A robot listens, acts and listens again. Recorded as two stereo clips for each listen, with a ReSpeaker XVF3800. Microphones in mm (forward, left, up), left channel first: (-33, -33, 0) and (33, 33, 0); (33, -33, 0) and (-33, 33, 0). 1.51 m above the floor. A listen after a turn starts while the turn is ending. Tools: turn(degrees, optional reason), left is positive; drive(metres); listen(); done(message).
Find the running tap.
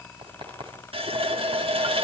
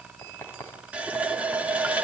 turn(degrees=60, reason="The running tap: 60° left.")
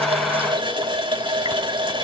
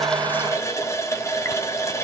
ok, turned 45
turn(degrees=15, reason="The running tap is now 15° left.")
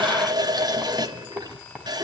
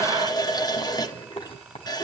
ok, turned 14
done("Facing the running tap, 1 to 2 m away.")